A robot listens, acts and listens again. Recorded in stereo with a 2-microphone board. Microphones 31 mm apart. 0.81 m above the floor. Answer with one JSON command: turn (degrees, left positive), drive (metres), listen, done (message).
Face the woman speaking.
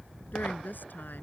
{"turn": 75}
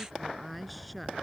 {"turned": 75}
{"done": "Found it: a woman speaking, straight ahead."}